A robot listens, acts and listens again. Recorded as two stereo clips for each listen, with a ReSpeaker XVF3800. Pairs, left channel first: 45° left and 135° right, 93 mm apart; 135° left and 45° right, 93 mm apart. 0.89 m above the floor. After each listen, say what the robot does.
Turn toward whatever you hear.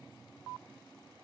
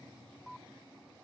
Keep listening.
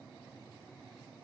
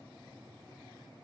Keep listening.
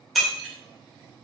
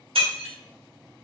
Turn 45° right.
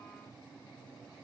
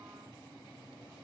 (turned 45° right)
I heard breaking glass from this way, but can't make it out now.